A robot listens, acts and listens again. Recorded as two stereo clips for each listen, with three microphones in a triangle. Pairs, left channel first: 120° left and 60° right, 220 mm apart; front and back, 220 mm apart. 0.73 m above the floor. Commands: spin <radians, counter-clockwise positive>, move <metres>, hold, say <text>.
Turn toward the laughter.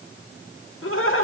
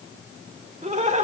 spin 2.18
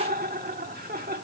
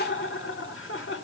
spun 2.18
spin -0.26
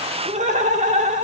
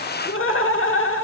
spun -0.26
say Found it: laughter, straight ahead, 1 to 2 m away.